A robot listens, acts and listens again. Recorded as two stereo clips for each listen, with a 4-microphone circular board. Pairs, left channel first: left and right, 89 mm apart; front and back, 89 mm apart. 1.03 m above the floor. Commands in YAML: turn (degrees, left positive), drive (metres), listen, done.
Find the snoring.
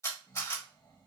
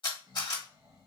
turn: 130
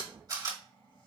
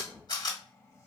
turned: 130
turn: 55
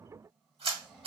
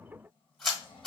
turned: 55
turn: 10
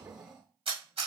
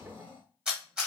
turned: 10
done: "Facing the snoring, 1 to 2 m away."